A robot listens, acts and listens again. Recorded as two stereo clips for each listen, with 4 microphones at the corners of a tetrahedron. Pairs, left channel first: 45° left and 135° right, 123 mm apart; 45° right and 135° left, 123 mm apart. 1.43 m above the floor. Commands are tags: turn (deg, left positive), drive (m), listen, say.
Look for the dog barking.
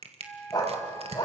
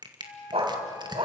<turn deg="95"/>
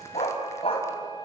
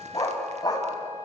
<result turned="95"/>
<turn deg="10"/>
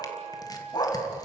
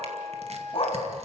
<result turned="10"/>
<say>Found it: a dog barking, straight ahead, 2 to 4 m away.</say>